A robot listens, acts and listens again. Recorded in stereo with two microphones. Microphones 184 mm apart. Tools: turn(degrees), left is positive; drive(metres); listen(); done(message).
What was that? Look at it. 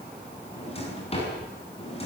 turn(degrees=35)
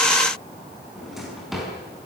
done("Found it: a drawer, straight ahead.")